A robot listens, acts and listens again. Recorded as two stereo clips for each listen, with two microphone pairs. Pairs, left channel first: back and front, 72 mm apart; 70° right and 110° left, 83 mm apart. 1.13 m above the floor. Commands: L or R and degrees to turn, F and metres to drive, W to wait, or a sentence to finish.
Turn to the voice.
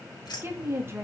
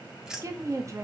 L55
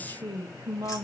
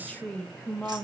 Found it: a woman speaking, straight ahead.